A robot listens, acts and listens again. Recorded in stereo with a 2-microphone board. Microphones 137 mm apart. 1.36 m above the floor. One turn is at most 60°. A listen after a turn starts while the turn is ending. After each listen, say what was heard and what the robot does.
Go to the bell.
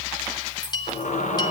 The bell: about 30° left or 150° left. Turn 30° left.
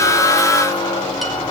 Keep listening.
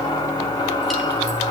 Keep listening.
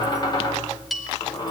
Drive 1.0 m forward.
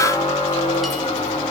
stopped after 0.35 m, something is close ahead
Keep listening.
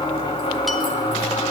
Keep listening.
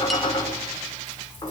Facing where the bell came from. I can't hear it now. I did not reach it.